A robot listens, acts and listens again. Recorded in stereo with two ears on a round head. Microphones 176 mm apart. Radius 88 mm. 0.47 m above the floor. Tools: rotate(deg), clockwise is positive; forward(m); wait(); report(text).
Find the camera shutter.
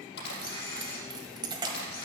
rotate(-55)
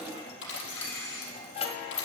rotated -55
rotate(-65)
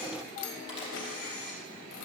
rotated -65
rotate(-25)
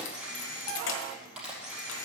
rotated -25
report("Facing the camera shutter, over 4 m away.")